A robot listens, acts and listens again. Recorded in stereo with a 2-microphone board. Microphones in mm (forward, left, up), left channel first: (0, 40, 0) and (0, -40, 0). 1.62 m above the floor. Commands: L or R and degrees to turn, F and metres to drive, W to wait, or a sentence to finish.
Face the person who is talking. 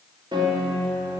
W
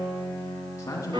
L40
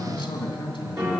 L100
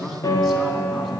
Found it: a man speaking, straight ahead, 2 to 4 m away.